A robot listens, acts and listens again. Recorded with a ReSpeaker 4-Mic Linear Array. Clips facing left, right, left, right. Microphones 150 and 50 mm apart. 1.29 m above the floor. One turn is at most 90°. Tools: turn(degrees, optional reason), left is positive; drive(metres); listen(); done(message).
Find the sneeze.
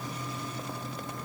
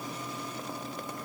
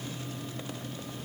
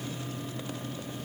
listen()
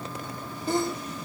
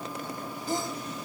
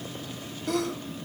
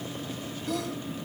turn(degrees=70, reason="The sneeze: about 70° left or 110° left.")
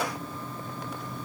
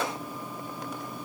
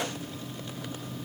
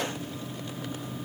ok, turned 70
listen()
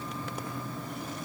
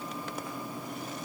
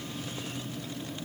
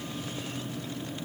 done("I heard a sneeze, but can't make it out now. It was about straight ahead or 40° left.")